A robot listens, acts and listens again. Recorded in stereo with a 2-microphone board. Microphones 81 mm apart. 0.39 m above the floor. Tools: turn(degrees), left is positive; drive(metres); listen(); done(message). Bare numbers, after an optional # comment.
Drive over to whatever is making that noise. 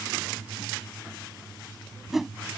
turn(30)
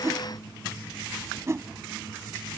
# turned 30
# So it is at 35° right.
turn(-35)
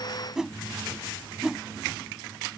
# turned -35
drive(1.0)
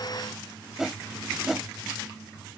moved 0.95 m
drive(1.0)
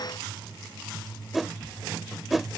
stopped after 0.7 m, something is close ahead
done("I am next to the whoosh.")